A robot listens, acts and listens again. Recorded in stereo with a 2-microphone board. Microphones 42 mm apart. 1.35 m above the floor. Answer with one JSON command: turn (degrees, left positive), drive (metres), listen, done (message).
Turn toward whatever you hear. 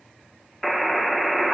{"turn": 30}
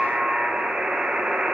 {"turn": -25}
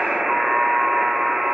{"turn": -10}
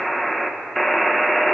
{"done": "Found it: a buzzer, straight ahead."}